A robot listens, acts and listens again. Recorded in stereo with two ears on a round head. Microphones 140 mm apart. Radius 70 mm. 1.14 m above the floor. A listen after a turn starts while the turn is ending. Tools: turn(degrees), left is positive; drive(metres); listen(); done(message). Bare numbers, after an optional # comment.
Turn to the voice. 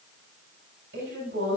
turn(-90)
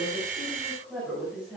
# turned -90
# So it is at 10° right.
turn(-10)
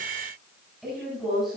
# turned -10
done("Facing the woman speaking.")